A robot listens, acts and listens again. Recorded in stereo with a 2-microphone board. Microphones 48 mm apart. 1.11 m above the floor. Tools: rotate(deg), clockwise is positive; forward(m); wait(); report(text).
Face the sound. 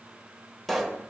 rotate(-30)
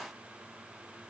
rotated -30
wait()
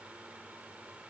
report("I heard a pop, but can't make it out now. It was about 25° right or 145° left.")